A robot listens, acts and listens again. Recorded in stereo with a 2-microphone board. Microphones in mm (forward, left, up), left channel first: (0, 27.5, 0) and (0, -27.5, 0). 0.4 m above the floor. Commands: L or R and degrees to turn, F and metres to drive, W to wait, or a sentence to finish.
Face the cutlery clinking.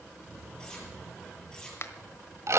L30
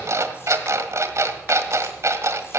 W
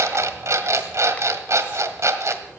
W
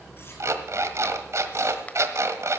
I heard cutlery clinking, but can't make it out now. It was about 15° right or 135° left.